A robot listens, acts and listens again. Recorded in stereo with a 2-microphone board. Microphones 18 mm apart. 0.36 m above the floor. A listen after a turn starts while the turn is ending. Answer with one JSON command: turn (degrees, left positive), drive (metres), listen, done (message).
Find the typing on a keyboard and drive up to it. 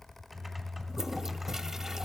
{"turn": -30}
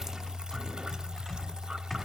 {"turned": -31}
{"turn": 20}
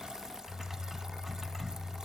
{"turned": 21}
{"drive": 1.0}
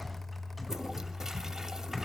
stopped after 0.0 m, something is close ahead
{"done": "Blocked. The typing on a keyboard is further on, straight ahead."}